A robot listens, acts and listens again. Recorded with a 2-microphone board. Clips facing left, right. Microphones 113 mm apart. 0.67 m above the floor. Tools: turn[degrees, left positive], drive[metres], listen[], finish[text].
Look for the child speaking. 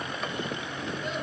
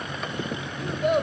Thought: The child speaking: about 65° right or 115° right.
Action: turn[-65]
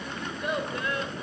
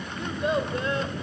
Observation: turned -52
Thought: So it is at 25° right.
Action: turn[-25]
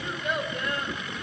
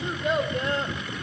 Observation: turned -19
Thought: The child speaking is now 30° right.
Action: turn[-30]
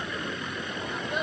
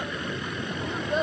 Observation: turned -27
Thought: The child speaking is now 30° right.
Action: turn[-30]
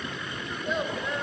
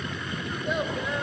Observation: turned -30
Action: listen[]
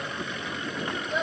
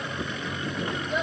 Action: finish[Found it: a child speaking, straight ahead.]